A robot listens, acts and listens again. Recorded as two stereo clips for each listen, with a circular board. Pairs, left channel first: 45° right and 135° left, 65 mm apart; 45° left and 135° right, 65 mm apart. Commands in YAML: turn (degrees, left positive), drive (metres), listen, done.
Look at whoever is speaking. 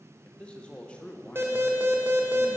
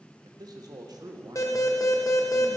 turn: -120
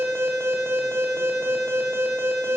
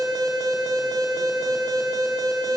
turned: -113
listen: true
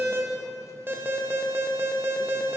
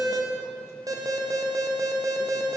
listen: true
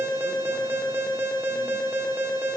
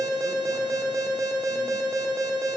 done: "Facing where the man speaking came from. I can't hear it now."